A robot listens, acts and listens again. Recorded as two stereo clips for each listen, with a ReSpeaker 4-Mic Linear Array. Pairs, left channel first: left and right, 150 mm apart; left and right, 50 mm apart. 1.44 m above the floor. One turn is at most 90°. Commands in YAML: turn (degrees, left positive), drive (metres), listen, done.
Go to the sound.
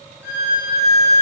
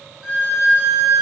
turn: -20
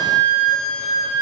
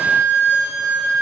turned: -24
turn: -90
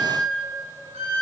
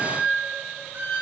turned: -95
turn: -40
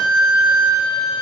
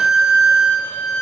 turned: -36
drive: 1.0
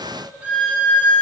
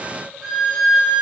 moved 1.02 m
turn: -10
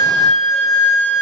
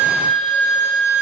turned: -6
drive: 1.0
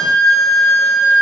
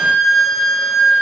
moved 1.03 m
drive: 1.0
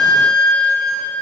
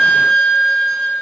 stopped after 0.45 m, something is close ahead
done: "Arrived at the violin, straight ahead."